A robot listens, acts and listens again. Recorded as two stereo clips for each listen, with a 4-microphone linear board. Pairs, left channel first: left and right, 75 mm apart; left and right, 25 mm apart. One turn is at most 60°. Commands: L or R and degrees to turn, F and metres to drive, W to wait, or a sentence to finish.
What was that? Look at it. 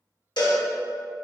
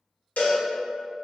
L60
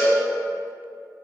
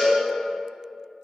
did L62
L30
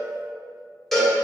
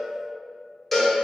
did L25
Facing the cowbell.